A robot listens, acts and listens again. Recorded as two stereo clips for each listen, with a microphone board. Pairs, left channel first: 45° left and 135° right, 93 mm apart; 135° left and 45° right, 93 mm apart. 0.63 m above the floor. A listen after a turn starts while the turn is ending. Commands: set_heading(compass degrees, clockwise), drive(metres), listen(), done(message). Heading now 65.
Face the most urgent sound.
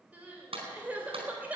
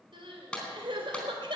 set_heading(130)
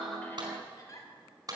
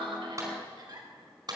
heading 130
done("Found it: crying, straight ahead.")